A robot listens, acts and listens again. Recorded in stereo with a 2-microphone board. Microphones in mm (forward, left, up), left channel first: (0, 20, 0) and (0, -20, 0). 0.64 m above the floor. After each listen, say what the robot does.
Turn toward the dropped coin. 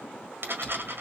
Turn 55° right.
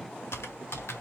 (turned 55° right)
Keep listening.
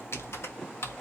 I heard a dropped coin, but can't make it out now. It was about straight ahead or 70° right.